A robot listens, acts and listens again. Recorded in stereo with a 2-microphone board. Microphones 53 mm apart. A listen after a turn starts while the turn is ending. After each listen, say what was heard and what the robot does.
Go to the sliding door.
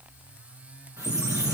Turn 30° left.
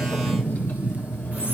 So it is at 155° left. Turn 155° left.
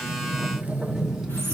The sliding door is now 10° right. Turn 10° right.
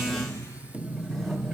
Drive 1.0 m forward.
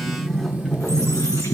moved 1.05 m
The sliding door is now 10° left. Turn 10° left.
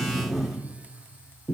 Drive 1.0 m forward.
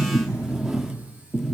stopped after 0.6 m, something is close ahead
I am next to the sliding door.